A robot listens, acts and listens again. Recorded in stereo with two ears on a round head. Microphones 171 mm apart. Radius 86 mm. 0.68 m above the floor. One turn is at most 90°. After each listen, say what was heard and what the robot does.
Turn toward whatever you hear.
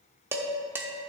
Turn 30° right.
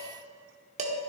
So it is at 140° right. Turn 90° right.
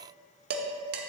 The dishes clattering is now 60° right. Turn 60° right.
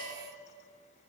Keep listening.
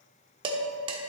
The dishes clattering is now 30° right. Turn 30° right.
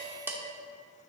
The dishes clattering is now 15° right. Turn 15° right.
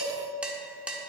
Facing the dishes clattering, 1 to 2 m away.